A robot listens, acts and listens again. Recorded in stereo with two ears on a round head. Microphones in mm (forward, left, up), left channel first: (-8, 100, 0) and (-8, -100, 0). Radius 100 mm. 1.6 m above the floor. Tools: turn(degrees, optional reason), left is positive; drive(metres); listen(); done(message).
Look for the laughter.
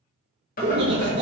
turn(degrees=-55, reason="The laughter: about 55° right or 125° right.")
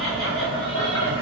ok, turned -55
listen()
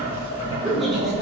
done("Facing the laughter.")